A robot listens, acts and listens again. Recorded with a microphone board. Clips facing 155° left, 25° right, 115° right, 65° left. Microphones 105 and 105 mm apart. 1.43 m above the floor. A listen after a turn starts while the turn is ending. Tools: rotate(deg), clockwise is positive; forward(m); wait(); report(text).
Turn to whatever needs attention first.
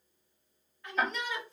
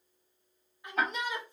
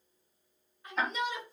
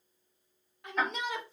rotate(-50)
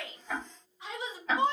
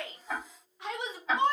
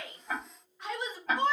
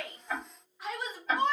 rotate(20)
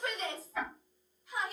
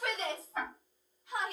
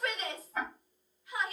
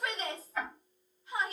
report("Facing the shout, 1 to 2 m away.")